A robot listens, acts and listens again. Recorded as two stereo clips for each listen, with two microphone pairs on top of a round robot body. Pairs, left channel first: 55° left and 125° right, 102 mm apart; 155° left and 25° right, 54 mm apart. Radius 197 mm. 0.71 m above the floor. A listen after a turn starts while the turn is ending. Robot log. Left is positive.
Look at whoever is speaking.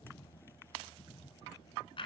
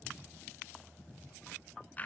cmd idle
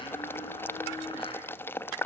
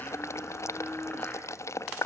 cmd idle
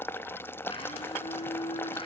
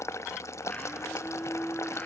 end: I can't make out anyone speaking, only a blender and boiling.